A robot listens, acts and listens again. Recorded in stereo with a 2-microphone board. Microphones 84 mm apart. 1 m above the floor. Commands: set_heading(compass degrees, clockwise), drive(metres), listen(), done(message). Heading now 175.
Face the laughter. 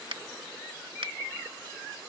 listen()
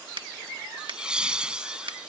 set_heading(205)
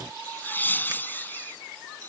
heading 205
set_heading(180)
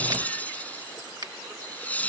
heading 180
set_heading(160)
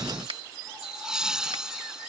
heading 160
set_heading(170)
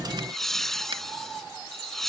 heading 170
done("Found it: laughter, straight ahead.")